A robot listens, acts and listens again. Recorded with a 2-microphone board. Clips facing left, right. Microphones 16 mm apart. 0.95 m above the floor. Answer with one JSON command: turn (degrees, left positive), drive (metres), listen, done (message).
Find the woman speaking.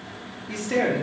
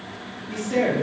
{"turn": 55}
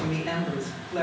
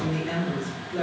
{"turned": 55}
{"turn": 55}
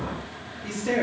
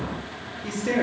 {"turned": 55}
{"turn": 10}
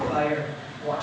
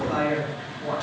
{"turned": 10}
{"done": "Found it: a woman speaking, straight ahead."}